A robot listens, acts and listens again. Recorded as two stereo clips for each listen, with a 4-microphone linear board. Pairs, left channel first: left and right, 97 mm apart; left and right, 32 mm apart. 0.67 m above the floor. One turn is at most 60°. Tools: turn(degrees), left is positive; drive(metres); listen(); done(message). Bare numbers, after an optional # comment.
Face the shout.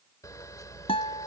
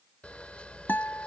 listen()
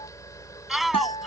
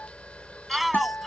turn(30)
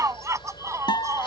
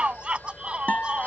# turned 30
# So it is at 35° right.
turn(-35)
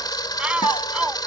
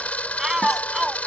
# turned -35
# The shout is now 15° right.
turn(-15)
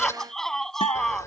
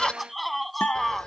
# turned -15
done("Found it: a shout, straight ahead.")